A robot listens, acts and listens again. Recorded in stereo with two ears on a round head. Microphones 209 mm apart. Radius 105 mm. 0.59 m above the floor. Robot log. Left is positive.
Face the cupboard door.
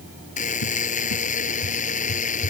cmd yaw +90
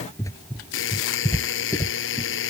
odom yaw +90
note: So it is at 15° left.
cmd yaw +15
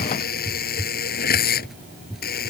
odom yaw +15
end: Facing the cupboard door.